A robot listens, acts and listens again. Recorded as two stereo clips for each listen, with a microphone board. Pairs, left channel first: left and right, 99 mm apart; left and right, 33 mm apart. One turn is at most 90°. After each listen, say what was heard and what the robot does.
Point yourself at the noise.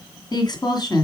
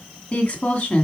The woman speaking: about 45° left or 135° left. Turn 45° left.
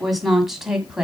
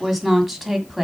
Facing the woman speaking, 1 to 2 m away.